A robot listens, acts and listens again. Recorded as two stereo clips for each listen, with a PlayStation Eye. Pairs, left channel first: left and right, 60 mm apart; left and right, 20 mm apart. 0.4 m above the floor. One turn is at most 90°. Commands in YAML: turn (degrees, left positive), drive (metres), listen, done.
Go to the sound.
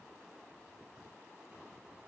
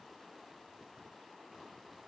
listen: true
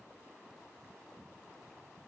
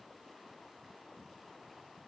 listen: true
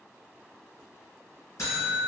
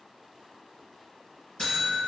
turn: 55
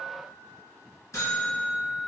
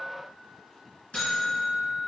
turn: 70
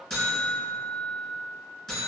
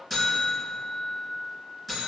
turn: 10
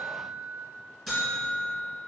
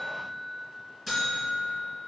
drive: 1.0
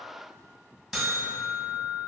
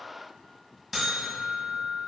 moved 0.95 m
drive: 1.0
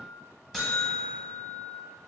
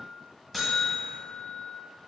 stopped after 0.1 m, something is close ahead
done: "Arrived at the buzzer, straight ahead."